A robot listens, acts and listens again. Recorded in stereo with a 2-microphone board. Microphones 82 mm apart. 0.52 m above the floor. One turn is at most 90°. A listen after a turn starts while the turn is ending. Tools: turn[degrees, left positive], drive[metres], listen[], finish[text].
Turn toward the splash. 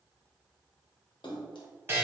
Thought: The splash: about 75° left or 105° left.
Action: turn[75]
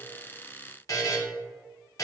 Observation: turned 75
Action: listen[]
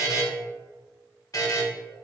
Action: finish[I heard a splash, but can't make it out now. It was about straight ahead or 30° left.]